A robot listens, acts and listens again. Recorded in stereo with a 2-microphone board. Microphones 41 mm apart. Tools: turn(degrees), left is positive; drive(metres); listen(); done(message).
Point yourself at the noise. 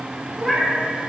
turn(degrees=30)
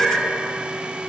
turn(degrees=140)
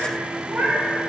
turn(degrees=-65)
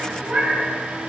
turn(degrees=-45)
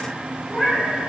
done("Facing the cat meowing.")